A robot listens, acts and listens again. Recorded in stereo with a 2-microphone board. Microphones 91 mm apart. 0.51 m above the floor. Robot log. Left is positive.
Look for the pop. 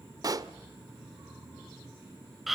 note: The pop: about 45° right or 135° right.
cmd yaw -45
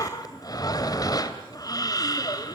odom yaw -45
cmd idle
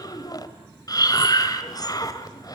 end: I heard a pop, but can't make it out now. It was about straight ahead or 90° right.